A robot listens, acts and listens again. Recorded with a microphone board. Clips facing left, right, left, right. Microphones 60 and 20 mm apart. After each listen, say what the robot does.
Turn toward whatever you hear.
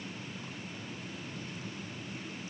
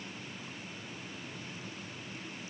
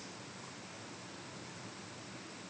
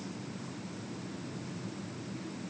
Keep listening.
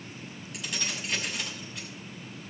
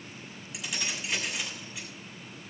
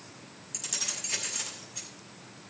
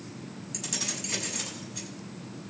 Turn 30° left.
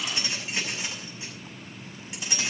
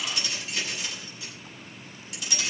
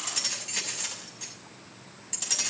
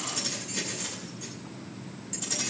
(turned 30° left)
Turn 150° left.
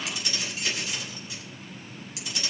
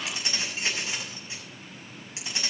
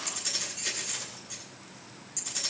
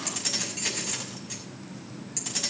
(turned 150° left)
Turn 30° right.
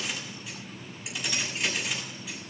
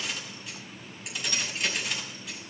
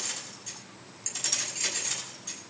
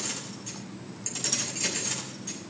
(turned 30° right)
Facing the keys jangling, over 4 m away.